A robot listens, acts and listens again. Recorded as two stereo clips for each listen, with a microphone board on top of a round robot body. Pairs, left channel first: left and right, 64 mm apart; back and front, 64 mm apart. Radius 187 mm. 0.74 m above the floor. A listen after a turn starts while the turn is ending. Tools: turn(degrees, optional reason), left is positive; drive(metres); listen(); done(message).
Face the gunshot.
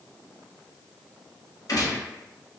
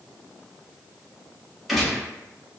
turn(degrees=85, reason="The gunshot: 85° left.")
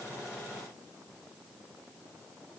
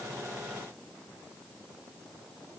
done("I heard a gunshot from this way, but can't make it out now.")